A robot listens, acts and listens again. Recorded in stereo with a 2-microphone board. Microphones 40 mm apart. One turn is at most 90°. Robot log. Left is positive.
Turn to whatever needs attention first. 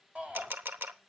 note: The shout: about 30° right or 150° right.
cmd yaw -30
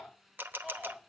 end: Found it: a shout, straight ahead.